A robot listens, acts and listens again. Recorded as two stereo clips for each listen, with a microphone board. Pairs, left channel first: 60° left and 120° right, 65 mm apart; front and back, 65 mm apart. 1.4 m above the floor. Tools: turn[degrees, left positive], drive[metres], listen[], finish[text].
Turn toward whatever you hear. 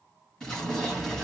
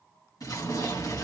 Thought: The explosion: 20° right.
Action: turn[-20]
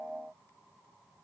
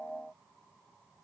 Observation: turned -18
Action: finish[Facing where the explosion came from. I can't hear it now.]